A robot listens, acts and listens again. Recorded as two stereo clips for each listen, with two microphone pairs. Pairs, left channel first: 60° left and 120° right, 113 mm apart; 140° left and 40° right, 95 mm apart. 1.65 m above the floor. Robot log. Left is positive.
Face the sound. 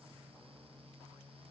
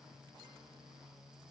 cmd idle
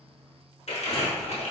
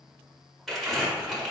note: The crumpling: 45° left.
cmd yaw +45
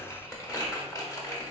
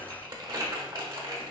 end: Facing the crumpling, under 1 m away.